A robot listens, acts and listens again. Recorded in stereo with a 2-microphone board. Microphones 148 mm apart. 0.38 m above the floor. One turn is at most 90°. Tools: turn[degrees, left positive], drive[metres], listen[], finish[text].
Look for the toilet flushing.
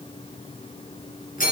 Action: listen[]
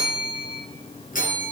Action: listen[]
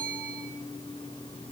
Action: finish[I can't make out a toilet flushing, only a bell.]